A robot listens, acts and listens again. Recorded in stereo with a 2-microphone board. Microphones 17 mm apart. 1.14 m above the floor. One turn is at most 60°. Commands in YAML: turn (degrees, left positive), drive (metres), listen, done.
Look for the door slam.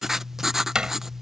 turn: -50
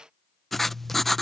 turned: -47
listen: true
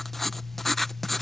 done: "I heard a door slam, but can't make it out now. It was about straight ahead or 85° right."